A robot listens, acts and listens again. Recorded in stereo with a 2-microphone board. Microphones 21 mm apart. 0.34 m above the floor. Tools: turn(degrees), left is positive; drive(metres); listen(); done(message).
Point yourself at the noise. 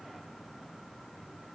listen()
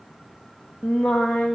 turn(degrees=70)
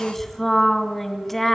turn(degrees=15)
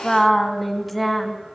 done("Facing the singing, 2 to 4 m away.")